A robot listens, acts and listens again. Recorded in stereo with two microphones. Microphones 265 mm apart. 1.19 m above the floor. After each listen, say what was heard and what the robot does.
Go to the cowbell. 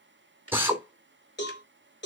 The cowbell: about 40° left or 140° left. Turn 40° left.
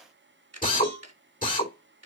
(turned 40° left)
So it is at 100° left. Turn 100° left.
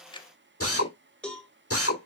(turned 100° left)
Drive 1.0 m forward.
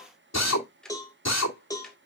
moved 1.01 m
The cowbell is now 15° left. Turn 15° left.
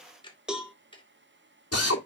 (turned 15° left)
Drive 1.0 m forward.
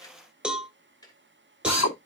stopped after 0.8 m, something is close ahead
Arrived at the cowbell, straight ahead.